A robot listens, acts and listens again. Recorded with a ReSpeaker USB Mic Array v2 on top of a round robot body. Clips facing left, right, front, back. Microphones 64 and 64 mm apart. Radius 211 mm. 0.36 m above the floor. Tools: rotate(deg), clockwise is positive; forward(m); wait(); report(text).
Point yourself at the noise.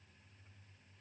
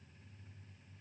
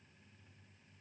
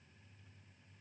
wait()
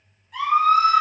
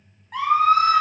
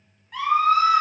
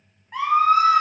rotate(120)
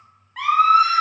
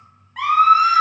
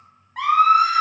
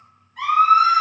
report("Facing the scream.")